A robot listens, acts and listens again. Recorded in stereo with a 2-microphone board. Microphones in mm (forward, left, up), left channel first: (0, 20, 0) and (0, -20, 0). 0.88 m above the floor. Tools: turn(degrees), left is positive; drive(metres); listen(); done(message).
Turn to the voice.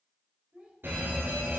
turn(degrees=-30)
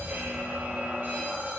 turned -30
listen()
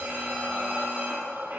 listen()
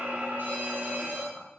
done("I heard a child speaking, but can't make it out now. It was about straight ahead or 120° right.")